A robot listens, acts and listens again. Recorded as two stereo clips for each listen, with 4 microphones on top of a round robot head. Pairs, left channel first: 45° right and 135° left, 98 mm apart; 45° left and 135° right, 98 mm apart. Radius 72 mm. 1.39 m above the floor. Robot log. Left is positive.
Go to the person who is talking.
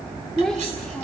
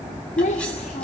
note: The child speaking: 40° left.
cmd yaw +40
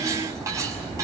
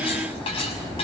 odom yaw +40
cmd idle
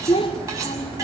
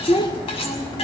cmd fwd 1.0
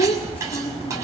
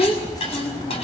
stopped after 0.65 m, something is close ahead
note: The child speaking is now 10° right.
cmd yaw -10
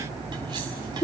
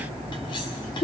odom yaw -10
end: Something is in my way. I am facing the child speaking but have not reached it.